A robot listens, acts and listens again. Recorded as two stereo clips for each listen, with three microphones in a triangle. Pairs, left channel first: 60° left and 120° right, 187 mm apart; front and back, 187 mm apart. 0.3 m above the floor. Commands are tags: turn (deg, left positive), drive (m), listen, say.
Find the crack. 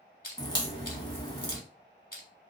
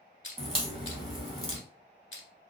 <turn deg="120"/>
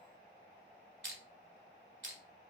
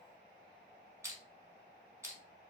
<say>Facing where the crack came from. I can't hear it now.</say>